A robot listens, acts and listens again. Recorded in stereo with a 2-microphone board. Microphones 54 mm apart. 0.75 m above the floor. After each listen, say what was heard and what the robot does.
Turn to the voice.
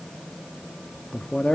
The man speaking: about 15° left or 165° left. Turn 15° left.
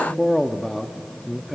Found it: a man speaking, straight ahead, under 1 m away.